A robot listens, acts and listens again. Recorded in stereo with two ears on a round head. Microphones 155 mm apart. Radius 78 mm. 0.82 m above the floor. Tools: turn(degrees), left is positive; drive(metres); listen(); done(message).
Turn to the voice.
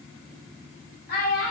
turn(degrees=60)
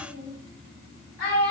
turn(degrees=60)
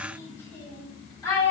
turn(degrees=15)
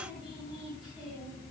listen()
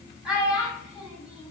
done("Facing the child speaking.")